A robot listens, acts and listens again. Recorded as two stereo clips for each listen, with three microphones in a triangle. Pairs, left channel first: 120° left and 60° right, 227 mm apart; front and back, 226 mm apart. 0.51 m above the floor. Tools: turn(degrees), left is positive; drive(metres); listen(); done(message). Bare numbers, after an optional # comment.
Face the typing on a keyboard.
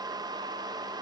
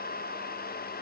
listen()
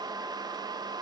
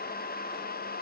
listen()
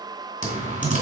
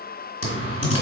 done("Found it: typing on a keyboard, straight ahead, 2 to 4 m away.")